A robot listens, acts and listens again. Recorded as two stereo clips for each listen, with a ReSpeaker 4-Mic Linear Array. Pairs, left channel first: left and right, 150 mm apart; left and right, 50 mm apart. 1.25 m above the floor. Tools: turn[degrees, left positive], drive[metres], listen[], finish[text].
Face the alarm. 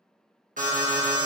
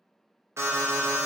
Thought: The alarm: about 60° right or 120° right.
Action: turn[-60]
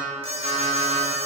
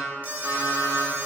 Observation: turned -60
Thought: So it is at 45° right.
Action: turn[-45]
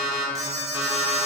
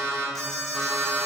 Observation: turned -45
Action: finish[Found it: an alarm, straight ahead, under 1 m away.]